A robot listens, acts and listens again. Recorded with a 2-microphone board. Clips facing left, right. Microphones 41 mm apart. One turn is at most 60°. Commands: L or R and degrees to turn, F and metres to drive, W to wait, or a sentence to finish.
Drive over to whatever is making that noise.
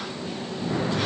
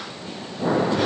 R60
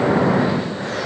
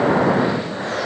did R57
R15
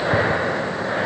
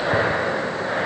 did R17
F1.0
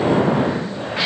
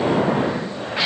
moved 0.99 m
F1.0
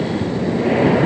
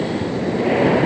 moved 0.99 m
F1.0
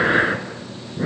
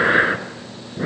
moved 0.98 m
R10
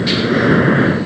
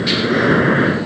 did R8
F1.0
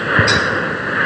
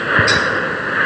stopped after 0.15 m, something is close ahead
Arrived at the breathing, straight ahead.